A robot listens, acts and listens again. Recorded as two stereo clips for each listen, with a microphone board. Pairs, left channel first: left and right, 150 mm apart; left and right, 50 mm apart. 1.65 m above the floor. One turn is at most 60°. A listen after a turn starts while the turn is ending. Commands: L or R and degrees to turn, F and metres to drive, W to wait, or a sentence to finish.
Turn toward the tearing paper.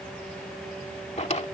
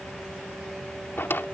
W
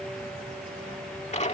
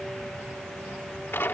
W
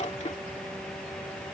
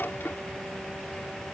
I can't make out tearing paper, only a drawer.